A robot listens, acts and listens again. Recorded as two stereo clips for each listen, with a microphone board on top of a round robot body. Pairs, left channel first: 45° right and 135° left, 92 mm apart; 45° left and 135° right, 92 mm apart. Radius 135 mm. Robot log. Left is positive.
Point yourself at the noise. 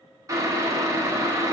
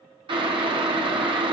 note: The boiling: 170° right.
cmd yaw -170
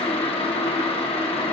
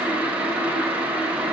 note: The boiling is now 60° right.
cmd yaw -60
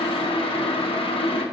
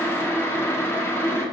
note: The boiling is now 20° right.
cmd yaw -20
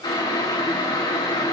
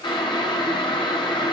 end: Facing the boiling, 1 to 2 m away.